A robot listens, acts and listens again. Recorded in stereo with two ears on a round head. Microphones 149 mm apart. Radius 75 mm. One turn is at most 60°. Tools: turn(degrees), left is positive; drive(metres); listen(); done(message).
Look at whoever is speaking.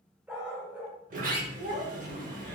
turn(degrees=-40)
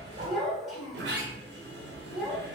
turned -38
done("Found it: a child speaking, straight ahead.")